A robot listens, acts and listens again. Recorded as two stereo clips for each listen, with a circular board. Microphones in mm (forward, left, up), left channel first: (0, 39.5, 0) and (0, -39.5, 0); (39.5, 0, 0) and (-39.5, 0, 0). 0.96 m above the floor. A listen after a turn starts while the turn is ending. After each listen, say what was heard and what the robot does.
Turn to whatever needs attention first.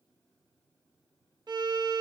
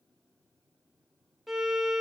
Keep listening.
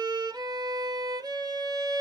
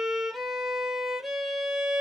Keep listening.
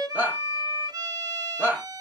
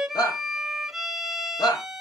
The shout: 25° right. Turn 25° right.
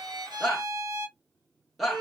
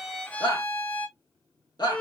Found it: a shout, straight ahead, 1 to 2 m away.